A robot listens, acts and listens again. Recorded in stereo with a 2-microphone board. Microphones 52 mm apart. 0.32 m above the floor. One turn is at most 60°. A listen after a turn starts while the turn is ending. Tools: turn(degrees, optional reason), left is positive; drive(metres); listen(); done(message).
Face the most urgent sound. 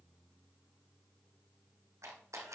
listen()
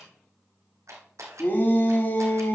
turn(degrees=45, reason="The shout: about 45° left or 135° left.")
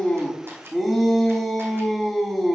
done("Facing the shout, 2 to 4 m away.")